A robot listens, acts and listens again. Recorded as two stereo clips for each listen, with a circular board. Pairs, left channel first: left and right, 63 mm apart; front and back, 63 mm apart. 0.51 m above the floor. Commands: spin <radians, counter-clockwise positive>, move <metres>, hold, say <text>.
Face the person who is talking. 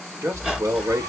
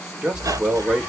spin -1.83
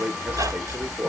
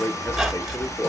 spin -0.52
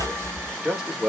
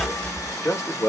spin -0.17
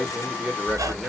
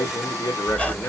say Facing the man speaking.